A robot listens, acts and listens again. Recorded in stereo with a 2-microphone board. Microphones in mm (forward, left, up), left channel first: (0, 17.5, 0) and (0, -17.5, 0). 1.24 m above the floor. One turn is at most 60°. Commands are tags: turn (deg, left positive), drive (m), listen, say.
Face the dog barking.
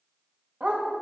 <turn deg="-45"/>
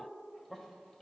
<listen/>
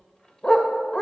<turn deg="30"/>
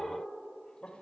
<listen/>
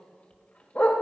<turn deg="45"/>
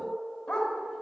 <turn deg="15"/>
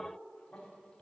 <listen/>
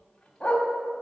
<turn deg="15"/>
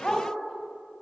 <say>Found it: a dog barking, straight ahead.</say>